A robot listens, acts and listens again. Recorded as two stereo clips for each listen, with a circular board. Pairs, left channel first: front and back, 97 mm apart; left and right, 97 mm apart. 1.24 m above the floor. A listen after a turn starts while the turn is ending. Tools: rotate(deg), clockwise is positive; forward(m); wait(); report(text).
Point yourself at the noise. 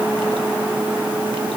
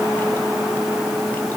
wait()
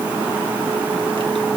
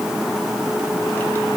wait()
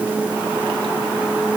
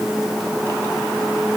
report("I can't make out anything.")